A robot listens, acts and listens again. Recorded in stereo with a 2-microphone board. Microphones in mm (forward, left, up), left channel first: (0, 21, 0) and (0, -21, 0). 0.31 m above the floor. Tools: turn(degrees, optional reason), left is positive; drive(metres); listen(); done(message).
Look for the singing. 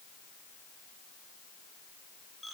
listen()
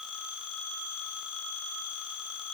listen()
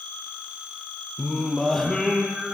turn(degrees=30)
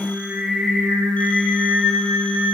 turn(degrees=-15, reason="So it is at 15° right.")
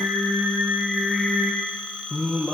done("Found it: singing, straight ahead, over 4 m away.")